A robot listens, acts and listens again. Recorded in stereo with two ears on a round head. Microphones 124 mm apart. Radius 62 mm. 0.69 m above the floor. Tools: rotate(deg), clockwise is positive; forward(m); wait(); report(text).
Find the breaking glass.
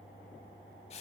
wait()
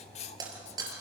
rotate(30)
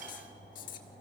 wait()
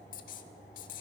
report("I heard breaking glass, but can't make it out now. It was about straight ahead or 120° right.")